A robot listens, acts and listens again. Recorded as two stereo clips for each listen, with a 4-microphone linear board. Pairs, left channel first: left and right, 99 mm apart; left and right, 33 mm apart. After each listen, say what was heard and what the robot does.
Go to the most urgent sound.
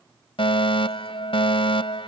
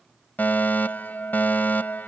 The fire alarm: about 60° left or 120° left. Turn 60° left.
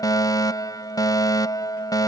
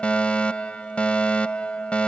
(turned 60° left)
So it is at 45° left. Turn 45° left.
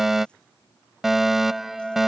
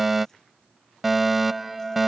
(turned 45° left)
Drive 1.0 m forward.
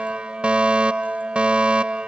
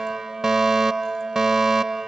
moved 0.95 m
The fire alarm is now 15° right. Turn 15° right.
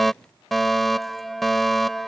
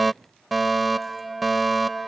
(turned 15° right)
Drive 1.0 m forward.
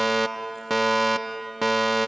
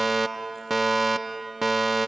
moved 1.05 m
Drive 1.0 m forward.
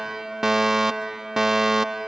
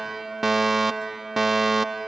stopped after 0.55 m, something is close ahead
The fire alarm is now 10° right. Turn 10° right.
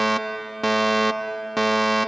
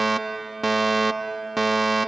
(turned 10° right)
Arrived at the fire alarm, straight ahead.